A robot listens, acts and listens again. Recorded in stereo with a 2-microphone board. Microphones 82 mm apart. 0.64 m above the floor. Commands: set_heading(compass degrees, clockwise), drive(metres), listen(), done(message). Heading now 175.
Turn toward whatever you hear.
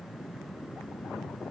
listen()
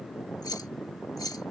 set_heading(125)
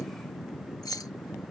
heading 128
set_heading(63)
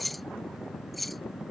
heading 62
done("Facing the keys jangling.")